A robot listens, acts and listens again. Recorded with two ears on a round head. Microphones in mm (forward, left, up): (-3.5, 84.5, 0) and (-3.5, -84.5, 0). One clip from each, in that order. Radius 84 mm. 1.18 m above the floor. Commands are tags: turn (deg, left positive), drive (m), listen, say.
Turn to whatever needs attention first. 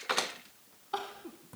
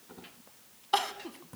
<turn deg="-60"/>
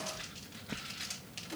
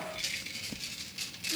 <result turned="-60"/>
<turn deg="-40"/>
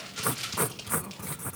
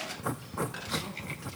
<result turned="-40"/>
<listen/>
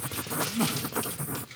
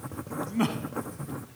<say>Found it: crying, straight ahead.</say>